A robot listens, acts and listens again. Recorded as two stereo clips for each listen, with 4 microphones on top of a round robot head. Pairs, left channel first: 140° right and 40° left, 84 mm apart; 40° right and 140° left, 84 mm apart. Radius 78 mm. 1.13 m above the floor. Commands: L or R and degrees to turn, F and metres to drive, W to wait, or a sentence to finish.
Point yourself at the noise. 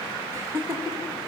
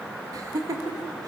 L95
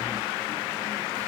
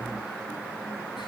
W
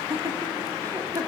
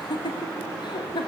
R10
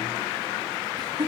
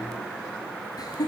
Facing the laughter, 2 to 4 m away.